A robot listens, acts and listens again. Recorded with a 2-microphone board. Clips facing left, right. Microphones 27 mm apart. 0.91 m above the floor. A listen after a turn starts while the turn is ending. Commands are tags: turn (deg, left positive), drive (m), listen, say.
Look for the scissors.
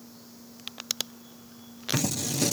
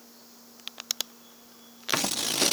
<turn deg="-45"/>
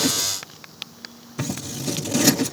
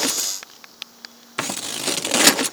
<turn deg="-85"/>
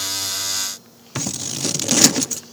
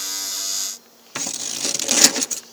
<say>Found it: scissors, straight ahead.</say>